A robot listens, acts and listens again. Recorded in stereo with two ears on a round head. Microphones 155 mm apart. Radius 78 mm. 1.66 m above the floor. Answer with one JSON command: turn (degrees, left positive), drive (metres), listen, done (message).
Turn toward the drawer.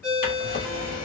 {"turn": 55}
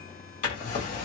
{"turn": 55}
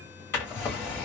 {"turn": 15}
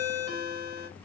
{"listen": true}
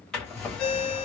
{"done": "Facing the drawer."}